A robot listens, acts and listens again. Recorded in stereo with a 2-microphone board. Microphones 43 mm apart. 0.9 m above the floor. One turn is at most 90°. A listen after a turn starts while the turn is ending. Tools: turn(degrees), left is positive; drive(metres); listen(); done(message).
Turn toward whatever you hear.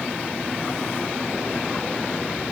listen()
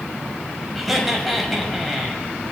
turn(degrees=30)
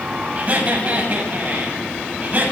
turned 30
turn(degrees=-40)
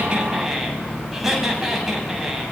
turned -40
done("Found it: laughter, straight ahead.")